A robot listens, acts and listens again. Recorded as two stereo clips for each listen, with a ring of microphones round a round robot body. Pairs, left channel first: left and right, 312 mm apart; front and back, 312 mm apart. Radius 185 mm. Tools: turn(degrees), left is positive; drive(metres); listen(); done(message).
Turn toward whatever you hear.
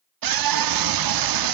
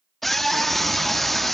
turn(degrees=-90)
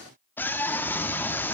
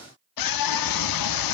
done("Facing the scream, 1 to 2 m away.")